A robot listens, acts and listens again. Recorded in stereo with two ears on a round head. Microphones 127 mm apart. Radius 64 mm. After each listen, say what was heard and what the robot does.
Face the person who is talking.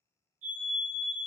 Keep listening.
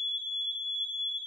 Keep listening.
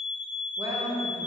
The woman speaking: about 30° right or 150° right. Turn 30° right.
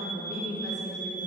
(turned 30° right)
So it is at 120° right. Turn 120° right.
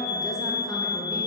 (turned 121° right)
Keep listening.
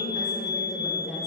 Found it: a woman speaking, straight ahead.